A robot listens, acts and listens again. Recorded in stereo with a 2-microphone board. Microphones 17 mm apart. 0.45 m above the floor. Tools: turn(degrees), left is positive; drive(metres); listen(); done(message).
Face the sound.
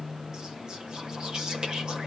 listen()
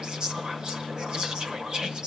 turn(degrees=-50)
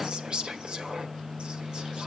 turn(degrees=-70)
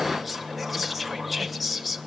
done("Found it: whispering, straight ahead, 1 to 2 m away.")